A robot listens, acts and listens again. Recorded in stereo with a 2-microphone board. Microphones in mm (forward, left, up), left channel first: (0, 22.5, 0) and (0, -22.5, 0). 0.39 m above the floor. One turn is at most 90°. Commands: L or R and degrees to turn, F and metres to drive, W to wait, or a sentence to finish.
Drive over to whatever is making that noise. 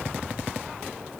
W
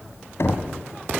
L70
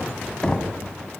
L20
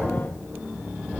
F1.0
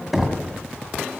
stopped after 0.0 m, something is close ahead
R10
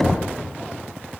Blocked. The knocking is further on, straight ahead.